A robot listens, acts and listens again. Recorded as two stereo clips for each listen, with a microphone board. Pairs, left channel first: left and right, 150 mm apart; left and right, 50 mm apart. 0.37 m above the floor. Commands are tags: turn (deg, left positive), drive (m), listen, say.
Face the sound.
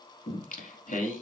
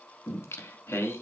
<turn deg="65"/>
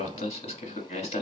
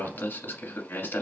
<turn deg="50"/>
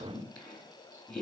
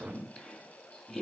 <turn deg="10"/>
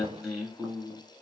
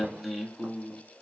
<say>Facing the singing, 1 to 2 m away.</say>